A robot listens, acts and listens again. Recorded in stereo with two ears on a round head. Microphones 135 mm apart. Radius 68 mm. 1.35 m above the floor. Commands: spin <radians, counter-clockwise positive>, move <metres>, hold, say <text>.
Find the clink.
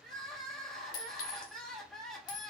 spin 1.05
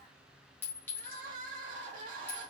spin 0.26
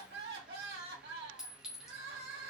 say Found it: a clink, straight ahead, 1 to 2 m away.